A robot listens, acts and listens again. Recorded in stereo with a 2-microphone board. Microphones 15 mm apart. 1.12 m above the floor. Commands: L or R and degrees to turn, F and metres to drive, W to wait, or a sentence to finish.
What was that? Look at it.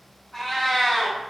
L35
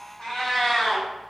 L105
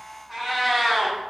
Facing the cat meowing, 1 to 2 m away.